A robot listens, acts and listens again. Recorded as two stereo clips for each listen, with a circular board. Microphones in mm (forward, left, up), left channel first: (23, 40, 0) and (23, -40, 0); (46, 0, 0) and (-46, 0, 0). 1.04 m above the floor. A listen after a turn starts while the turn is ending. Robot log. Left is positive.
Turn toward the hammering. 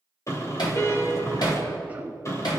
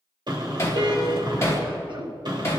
note: The hammering: 60° left.
cmd yaw +60
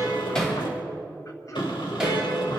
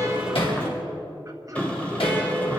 cmd idle
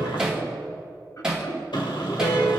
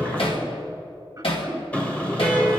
note: The hammering is now 10° right.
cmd yaw -10
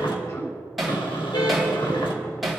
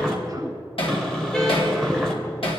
end: Facing the hammering.